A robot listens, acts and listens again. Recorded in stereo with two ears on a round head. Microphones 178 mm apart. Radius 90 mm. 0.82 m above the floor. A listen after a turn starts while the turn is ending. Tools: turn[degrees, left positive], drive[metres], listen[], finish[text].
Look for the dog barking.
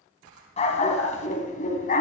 Thought: The dog barking: about 45° left or 135° left.
Action: turn[45]
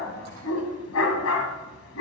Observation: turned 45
Thought: So it is at 70° left.
Action: turn[70]
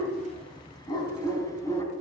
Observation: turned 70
Thought: The dog barking is now 15° left.
Action: turn[15]
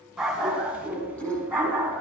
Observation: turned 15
Thought: The dog barking is now 10° right.
Action: turn[-10]
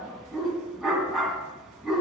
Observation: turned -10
Action: finish[Found it: a dog barking, straight ahead.]